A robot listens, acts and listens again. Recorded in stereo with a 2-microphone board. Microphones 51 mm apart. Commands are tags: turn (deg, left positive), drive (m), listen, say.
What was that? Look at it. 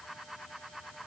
<listen/>
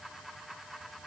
<listen/>
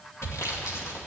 <turn deg="70"/>
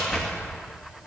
<say>Found it: sawing, straight ahead, 2 to 4 m away.</say>